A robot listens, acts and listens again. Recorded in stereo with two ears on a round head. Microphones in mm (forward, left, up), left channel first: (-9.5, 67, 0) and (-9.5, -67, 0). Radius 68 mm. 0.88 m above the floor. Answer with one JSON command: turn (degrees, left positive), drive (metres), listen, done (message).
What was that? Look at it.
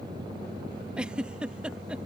{"turn": -30}
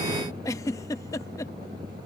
{"turn": 25}
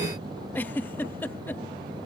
{"turn": 15}
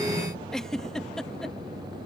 {"done": "Found it: a giggle, straight ahead."}